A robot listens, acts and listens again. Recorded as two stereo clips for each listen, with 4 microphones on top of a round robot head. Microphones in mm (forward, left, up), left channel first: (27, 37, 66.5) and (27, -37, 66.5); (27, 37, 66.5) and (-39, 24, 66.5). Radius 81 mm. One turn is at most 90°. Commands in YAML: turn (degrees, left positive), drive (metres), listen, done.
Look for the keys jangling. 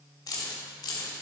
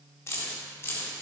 turn: 70
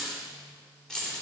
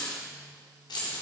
turn: 10
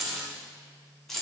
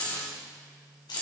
done: "Facing the keys jangling, 2 to 4 m away."